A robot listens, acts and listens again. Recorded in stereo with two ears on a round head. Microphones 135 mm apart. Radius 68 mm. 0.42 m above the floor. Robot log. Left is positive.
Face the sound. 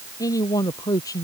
note: The man speaking: about 25° left or 155° left.
cmd yaw +25
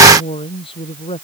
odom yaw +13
note: So it is at 145° left.
cmd yaw +145
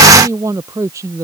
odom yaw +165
note: The man speaking is now 20° right.
cmd yaw -20
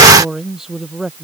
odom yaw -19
end: Facing the man speaking.